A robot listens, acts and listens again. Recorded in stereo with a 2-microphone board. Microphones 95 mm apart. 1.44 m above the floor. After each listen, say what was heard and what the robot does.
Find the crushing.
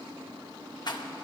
Keep listening.
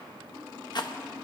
Keep listening.
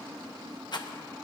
I can't make out crushing, only a rattle.